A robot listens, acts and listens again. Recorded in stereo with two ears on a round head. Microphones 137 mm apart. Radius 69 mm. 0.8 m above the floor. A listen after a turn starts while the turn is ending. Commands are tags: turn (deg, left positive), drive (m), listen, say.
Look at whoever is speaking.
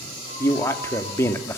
<turn deg="15"/>
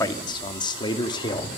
<turn deg="150"/>
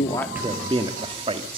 <turn deg="-40"/>
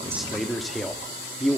<say>Found it: a man speaking, straight ahead.</say>